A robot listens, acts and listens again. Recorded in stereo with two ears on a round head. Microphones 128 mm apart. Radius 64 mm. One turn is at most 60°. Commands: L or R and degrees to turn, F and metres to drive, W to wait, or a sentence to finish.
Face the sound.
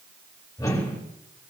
L25
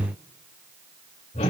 L60
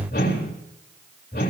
L60
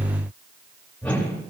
L10
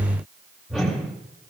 Found it: a whoosh, straight ahead, 2 to 4 m away.